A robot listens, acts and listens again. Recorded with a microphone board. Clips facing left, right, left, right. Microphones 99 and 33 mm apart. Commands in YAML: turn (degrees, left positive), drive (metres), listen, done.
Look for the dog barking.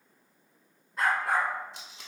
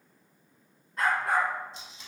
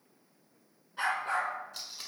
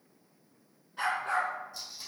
turn: 30
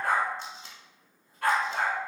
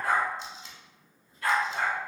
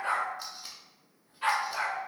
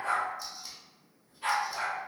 turn: 110
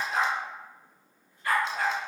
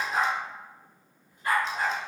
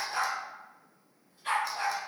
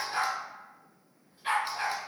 turn: -15
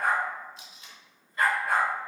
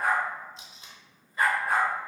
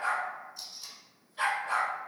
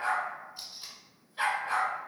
done: "Found it: a dog barking, straight ahead, 1 to 2 m away."